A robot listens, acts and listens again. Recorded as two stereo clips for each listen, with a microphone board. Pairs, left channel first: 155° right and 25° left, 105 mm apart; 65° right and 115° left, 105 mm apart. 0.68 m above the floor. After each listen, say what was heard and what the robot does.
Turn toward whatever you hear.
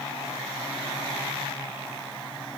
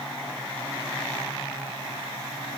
Keep listening.
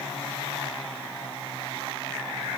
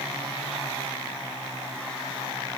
Keep listening.
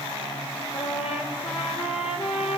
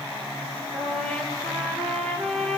The trumpet: 145° right. Turn 145° right.
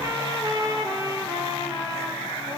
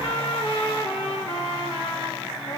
The trumpet is now 30° right. Turn 30° right.
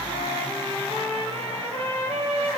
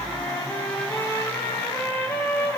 Found it: a trumpet, straight ahead.